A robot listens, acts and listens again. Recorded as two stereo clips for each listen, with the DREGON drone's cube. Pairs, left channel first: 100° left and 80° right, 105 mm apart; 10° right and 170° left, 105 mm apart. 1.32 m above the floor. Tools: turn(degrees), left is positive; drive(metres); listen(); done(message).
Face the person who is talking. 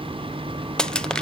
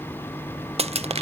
listen()
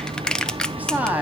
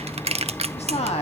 done("Facing the woman speaking, 2 to 4 m away.")